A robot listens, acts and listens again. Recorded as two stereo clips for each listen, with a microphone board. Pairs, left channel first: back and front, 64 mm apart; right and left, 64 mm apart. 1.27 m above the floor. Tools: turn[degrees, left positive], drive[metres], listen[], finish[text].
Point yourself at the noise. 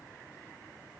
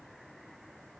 Action: listen[]
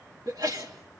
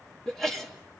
Action: finish[Facing the sneeze, 2 to 4 m away.]